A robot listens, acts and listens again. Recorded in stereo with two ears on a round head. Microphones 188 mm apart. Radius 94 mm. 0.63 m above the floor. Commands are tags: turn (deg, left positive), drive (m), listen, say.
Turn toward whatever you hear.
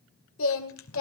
<turn deg="70"/>
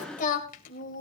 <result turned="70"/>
<turn deg="45"/>
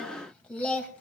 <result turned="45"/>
<say>Facing the singing, 2 to 4 m away.</say>